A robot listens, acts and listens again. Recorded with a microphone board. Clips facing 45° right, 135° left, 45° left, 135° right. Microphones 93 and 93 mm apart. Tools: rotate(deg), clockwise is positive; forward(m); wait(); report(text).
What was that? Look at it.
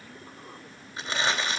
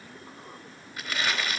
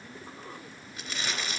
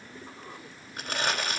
rotate(105)
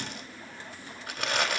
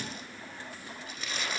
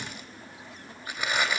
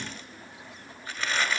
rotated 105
rotate(30)
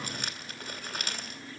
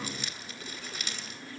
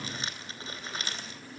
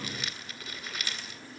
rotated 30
rotate(10)
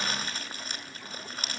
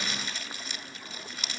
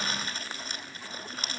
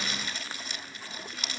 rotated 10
report("Found it: crumpling, straight ahead, 2 to 4 m away.")